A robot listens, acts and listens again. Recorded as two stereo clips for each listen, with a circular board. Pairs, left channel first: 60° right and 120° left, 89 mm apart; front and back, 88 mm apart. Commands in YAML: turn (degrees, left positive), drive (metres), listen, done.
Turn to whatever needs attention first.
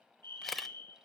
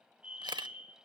turn: 110
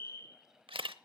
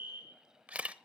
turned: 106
done: "Facing the fire alarm."